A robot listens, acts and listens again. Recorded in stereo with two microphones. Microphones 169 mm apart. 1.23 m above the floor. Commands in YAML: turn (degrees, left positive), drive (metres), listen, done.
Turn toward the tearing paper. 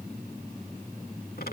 listen: true
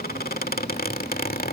listen: true
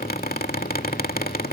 done: "I can't make out tearing paper, only a squeak."